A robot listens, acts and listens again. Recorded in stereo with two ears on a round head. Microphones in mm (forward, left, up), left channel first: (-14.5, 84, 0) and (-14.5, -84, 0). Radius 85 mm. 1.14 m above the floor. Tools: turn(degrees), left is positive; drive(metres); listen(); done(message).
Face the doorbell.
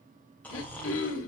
listen()
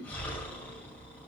listen()
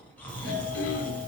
turn(degrees=-40)
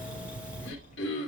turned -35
done("Facing the doorbell, 1 to 2 m away.")